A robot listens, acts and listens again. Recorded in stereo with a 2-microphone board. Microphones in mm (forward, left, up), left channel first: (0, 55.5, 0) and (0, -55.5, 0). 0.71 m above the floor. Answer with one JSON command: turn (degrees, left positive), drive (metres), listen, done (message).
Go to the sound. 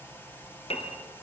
{"turn": 70}
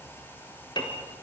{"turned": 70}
{"turn": 45}
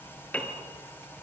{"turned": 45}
{"turn": 15}
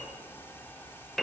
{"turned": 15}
{"drive": 1.0}
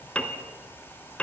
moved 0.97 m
{"turn": 10}
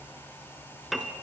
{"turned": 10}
{"drive": 1.0}
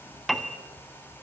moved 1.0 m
{"drive": 1.0}
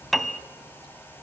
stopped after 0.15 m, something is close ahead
{"done": "I am next to the piano."}